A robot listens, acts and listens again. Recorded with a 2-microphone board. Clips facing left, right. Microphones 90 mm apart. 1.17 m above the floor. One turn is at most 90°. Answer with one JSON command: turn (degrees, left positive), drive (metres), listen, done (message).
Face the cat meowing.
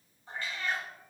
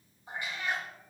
{"turn": -20}
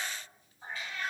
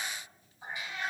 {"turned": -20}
{"turn": -20}
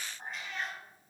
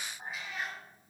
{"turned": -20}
{"turn": -30}
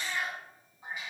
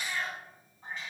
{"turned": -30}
{"turn": 10}
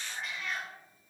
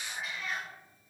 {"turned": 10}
{"done": "Found it: a cat meowing, straight ahead, 2 to 4 m away."}